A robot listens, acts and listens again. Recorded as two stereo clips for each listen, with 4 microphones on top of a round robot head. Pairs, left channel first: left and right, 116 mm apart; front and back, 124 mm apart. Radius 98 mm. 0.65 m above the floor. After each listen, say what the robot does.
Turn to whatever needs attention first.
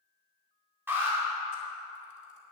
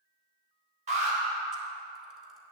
Turn 160° right.
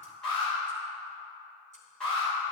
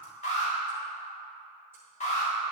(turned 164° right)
Found it: an alarm, straight ahead.